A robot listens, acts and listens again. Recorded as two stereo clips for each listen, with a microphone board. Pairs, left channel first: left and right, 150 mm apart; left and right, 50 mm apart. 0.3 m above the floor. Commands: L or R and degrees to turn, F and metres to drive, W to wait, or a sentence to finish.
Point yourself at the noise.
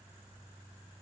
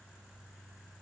W
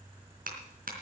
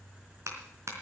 R70
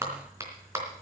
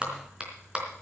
R20
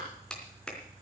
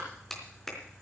Found it: a clap, straight ahead, 2 to 4 m away.